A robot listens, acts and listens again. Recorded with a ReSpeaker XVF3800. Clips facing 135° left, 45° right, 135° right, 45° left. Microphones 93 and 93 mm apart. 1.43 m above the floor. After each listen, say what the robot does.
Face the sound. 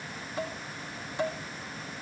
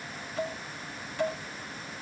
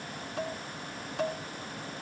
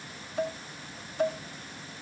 Turn 155° right.
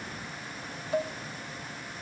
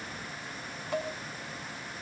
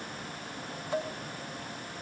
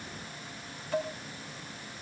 Turn 65° right.
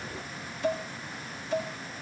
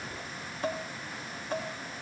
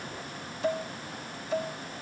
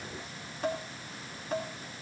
Found it: dishes clattering, straight ahead.